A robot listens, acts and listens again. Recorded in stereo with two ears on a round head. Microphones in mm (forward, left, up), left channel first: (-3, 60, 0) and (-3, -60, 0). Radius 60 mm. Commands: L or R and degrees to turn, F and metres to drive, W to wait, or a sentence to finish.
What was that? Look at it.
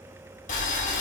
L65
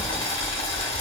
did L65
L45
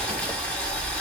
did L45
L10
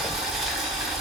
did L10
Found it: boiling, straight ahead.